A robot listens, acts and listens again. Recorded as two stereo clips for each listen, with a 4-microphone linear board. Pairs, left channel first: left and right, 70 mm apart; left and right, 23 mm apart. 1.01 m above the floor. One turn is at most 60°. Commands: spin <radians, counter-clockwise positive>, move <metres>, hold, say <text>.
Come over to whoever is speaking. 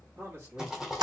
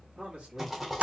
spin -0.61
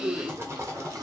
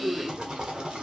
spin -1.05
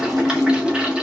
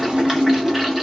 spin -0.79
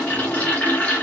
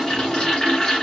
hold
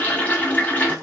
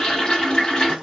say I heard a man speaking from this way, but can't make it out now. I did not reach it.